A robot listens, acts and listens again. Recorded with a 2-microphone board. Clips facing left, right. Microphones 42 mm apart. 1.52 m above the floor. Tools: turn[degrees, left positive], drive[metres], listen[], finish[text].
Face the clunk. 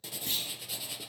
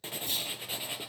Action: turn[90]
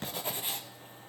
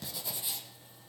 Action: finish[Facing where the clunk came from. I can't hear it now.]